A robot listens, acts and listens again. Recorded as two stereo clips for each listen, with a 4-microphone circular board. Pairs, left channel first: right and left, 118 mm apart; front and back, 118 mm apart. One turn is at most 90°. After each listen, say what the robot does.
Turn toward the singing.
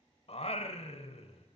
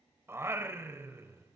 Turn 90° right.
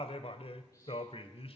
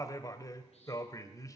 Turn 60° right.
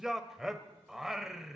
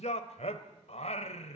Found it: singing, straight ahead, 1 to 2 m away.